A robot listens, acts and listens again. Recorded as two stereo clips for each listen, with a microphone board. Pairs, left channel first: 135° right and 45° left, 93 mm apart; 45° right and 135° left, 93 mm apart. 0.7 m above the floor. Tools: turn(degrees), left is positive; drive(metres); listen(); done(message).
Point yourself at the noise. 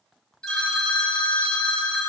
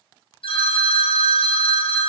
turn(degrees=-50)
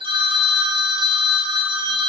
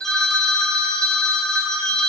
turn(degrees=35)
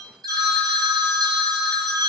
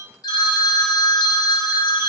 done("Found it: a phone ringing, straight ahead, under 1 m away.")